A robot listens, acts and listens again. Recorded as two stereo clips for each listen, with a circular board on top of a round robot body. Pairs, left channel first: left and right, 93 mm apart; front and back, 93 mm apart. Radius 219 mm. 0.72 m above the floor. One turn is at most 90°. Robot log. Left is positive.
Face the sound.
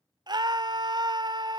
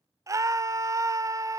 note: The scream: 125° right.
cmd yaw -90
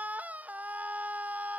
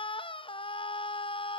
note: The scream is now 15° right.
cmd yaw -15
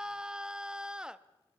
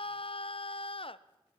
note: The scream is now 10° right.
cmd yaw -10
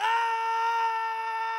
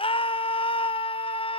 end: Found it: a scream, straight ahead.